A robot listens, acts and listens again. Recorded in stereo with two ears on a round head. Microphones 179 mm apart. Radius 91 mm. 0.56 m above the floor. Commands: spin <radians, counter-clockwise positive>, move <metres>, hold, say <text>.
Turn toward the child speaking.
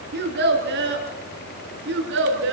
spin -1.13
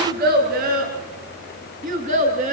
spin -0.70
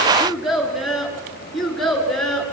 say Facing the child speaking.